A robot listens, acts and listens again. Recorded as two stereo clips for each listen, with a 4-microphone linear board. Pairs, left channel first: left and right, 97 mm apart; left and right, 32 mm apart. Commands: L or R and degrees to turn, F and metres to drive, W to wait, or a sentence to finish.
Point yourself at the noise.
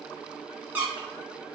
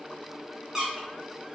R20
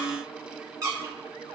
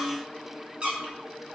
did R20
R140
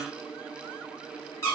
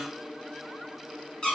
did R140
L35
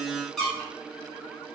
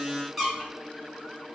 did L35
Found it: a squeak, straight ahead.